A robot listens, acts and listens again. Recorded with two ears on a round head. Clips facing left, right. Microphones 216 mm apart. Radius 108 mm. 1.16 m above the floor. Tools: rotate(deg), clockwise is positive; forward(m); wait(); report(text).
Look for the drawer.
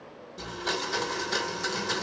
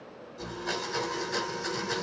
wait()
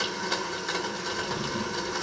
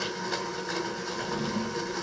rotate(-30)
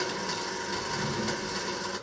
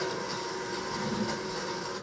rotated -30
rotate(-120)
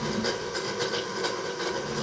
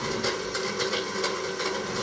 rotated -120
rotate(-10)
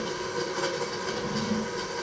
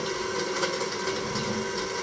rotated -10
report("Found it: a drawer, straight ahead.")